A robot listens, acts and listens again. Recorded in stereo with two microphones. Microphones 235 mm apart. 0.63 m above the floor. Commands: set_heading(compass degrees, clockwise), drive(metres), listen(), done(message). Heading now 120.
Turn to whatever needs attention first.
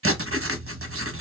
listen()
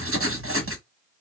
listen()
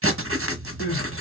set_heading(85)
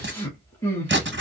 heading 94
set_heading(84)
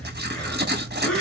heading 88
done("Found it: crying, straight ahead, 2 to 4 m away.")